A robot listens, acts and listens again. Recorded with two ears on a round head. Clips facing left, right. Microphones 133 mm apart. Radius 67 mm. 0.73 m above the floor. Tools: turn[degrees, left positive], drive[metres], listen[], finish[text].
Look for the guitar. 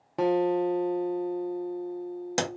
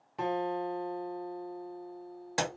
Thought: The guitar: about 60° left or 120° left.
Action: turn[60]
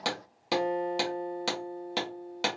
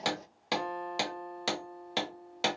Thought: So it is at 30° left.
Action: turn[30]
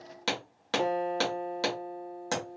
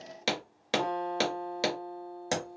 Action: finish[Found it: a guitar, straight ahead, under 1 m away.]